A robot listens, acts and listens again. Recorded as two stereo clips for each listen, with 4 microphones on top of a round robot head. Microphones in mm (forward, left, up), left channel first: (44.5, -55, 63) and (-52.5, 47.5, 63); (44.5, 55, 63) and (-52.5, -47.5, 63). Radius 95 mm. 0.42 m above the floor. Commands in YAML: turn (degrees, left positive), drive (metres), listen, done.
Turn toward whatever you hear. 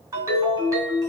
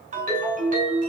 turn: -160
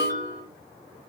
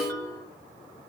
turn: -25
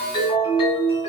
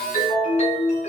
turn: 10
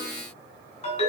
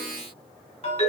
done: "Found it: a ringtone, straight ahead."